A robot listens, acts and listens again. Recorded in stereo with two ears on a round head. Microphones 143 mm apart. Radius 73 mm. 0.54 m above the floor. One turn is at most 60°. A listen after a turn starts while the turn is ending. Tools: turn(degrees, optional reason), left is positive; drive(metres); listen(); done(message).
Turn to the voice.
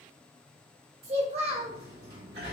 turn(degrees=-35, reason="The child speaking: about 35° right or 145° right.")
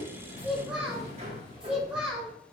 done("Facing the child speaking, under 1 m away.")